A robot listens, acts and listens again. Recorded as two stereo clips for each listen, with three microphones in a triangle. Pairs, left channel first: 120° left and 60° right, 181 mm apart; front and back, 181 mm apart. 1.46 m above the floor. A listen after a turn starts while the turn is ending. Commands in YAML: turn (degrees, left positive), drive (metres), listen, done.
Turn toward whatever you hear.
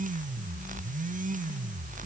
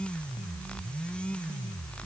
listen: true
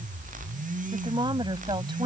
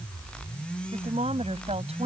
turn: -125
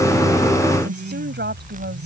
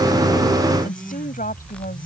turn: -40
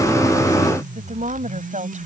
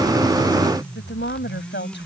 turn: -10
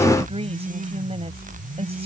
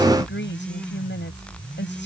done: "Facing the woman speaking."